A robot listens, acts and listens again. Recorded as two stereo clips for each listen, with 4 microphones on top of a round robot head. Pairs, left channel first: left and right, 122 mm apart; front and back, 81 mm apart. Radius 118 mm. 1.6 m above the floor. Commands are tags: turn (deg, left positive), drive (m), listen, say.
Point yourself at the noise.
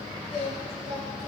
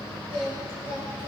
<turn deg="-175"/>
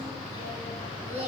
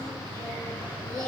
<turn deg="-55"/>
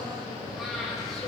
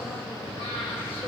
<say>Found it: singing, straight ahead, 2 to 4 m away.</say>